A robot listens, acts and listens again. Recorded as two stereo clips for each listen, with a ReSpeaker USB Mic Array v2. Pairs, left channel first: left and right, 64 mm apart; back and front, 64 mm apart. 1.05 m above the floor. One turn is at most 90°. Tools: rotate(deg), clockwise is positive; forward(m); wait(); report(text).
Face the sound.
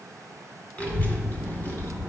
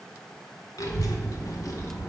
rotate(-90)
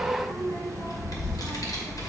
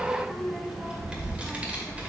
rotate(-70)
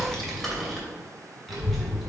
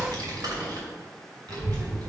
report("Facing the child speaking, 2 to 4 m away.")